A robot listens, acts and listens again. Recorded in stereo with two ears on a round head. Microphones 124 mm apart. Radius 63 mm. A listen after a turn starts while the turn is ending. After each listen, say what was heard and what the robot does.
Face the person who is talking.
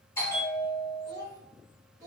The child speaking: about 25° right or 155° right. Turn 25° right.
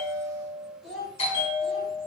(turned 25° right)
Found it: a child speaking, straight ahead.